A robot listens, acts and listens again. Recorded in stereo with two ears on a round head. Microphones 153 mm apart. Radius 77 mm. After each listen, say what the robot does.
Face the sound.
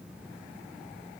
Keep listening.
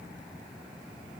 Keep listening.
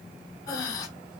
Turn 20° left.
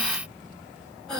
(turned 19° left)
Found it: breathing, straight ahead.